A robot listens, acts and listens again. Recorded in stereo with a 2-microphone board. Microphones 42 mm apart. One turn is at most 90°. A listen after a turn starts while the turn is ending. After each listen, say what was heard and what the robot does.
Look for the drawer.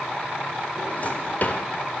The drawer: about 45° left or 135° left. Turn 45° left.
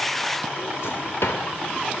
So it is at 90° left. Turn 90° left.
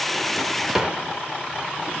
The drawer is now 20° right. Turn 20° right.
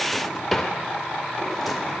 Found it: a drawer, straight ahead.